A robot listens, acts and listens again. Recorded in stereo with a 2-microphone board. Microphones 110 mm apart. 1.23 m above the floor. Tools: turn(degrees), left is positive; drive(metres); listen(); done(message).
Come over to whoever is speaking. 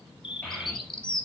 turn(degrees=30)
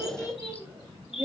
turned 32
turn(degrees=-20)
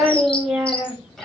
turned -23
drive(metres=1.0)
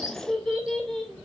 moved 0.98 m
drive(metres=1.0)
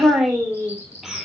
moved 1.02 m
drive(metres=1.0)
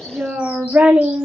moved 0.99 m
turn(degrees=-10)
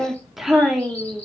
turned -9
drive(metres=1.0)
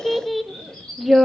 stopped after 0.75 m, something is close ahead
done("Arrived at the child speaking, straight ahead.")